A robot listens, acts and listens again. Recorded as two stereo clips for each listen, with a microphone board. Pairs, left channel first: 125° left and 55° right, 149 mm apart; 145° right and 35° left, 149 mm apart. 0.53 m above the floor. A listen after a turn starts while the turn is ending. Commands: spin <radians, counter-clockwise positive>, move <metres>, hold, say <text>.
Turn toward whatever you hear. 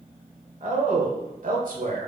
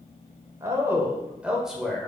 spin -1.05
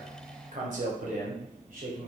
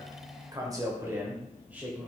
spin -0.87
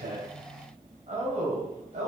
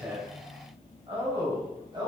spin -0.44
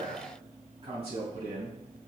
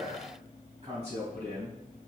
spin -0.17
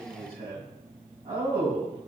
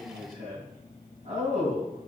say Found it: a man speaking, straight ahead, 2 to 4 m away.